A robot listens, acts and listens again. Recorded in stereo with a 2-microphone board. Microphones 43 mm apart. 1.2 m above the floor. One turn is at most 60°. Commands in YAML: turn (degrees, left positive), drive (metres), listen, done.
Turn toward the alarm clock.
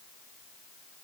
listen: true
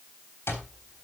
turn: 60
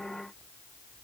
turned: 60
turn: 30
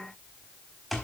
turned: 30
done: "Facing the alarm clock, 2 to 4 m away."